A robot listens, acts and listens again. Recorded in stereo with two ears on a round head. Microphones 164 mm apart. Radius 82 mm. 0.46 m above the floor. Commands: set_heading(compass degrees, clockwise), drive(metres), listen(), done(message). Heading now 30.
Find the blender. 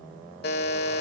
listen()
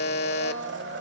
set_heading(100)
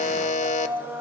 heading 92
set_heading(102)
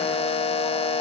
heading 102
listen()
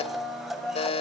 done("Found it: a blender, straight ahead, 1 to 2 m away.")